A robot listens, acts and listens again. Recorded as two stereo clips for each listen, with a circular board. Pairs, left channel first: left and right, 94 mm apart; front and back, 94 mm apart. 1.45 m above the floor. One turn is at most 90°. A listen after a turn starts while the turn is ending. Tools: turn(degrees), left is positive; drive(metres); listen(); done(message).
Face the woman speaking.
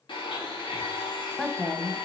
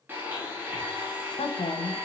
turn(degrees=10)
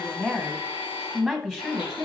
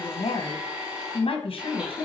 done("Found it: a woman speaking, straight ahead, 1 to 2 m away.")